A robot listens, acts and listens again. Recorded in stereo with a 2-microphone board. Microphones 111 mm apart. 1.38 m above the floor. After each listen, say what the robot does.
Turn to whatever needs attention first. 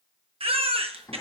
Turn 60° right.
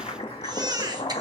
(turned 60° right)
Turn 45° right.
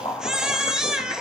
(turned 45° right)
Facing the baby crying, 1 to 2 m away.